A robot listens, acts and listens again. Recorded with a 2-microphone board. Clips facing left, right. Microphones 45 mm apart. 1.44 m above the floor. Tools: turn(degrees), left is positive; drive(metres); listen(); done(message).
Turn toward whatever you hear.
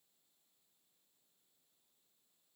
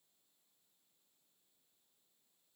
listen()
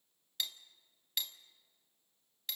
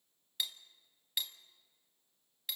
turn(degrees=-30)
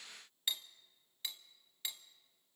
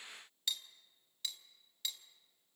turn(degrees=25)
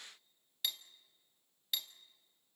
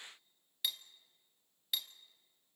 done("Found it: cutlery clinking, straight ahead.")